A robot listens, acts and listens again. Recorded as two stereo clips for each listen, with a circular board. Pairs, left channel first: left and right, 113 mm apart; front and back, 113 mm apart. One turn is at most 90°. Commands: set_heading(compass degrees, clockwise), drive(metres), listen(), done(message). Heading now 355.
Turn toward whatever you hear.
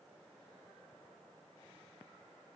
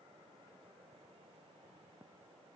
listen()
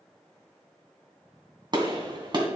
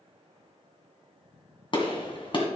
set_heading(35)
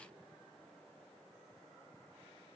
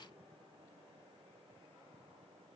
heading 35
done("I heard a gunshot from this way, but can't make it out now.")